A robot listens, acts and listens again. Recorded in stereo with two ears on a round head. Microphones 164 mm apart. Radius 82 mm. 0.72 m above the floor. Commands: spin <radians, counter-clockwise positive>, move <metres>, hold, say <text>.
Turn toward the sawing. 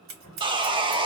spin -0.44
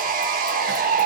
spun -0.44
spin -2.18
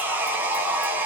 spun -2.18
spin -0.17
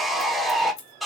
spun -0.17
say Found it: sawing, straight ahead, under 1 m away.